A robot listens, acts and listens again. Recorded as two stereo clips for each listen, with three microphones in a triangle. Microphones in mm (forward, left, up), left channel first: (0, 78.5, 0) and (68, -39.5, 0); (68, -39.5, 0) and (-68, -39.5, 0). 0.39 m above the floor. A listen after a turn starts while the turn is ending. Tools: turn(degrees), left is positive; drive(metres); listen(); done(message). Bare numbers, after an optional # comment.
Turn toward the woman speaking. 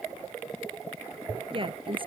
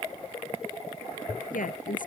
# The woman speaking: 10° right.
turn(-10)
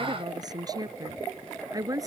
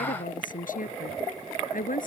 done("Found it: a woman speaking, straight ahead.")